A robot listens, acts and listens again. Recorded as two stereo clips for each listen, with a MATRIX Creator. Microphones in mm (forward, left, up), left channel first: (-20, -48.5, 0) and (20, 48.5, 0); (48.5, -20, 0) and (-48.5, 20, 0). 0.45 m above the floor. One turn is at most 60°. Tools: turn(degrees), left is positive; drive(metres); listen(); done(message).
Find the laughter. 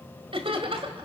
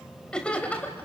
turn(degrees=50)
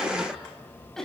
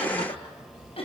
turn(degrees=-30)
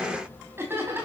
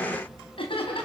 done("Found it: laughter, straight ahead.")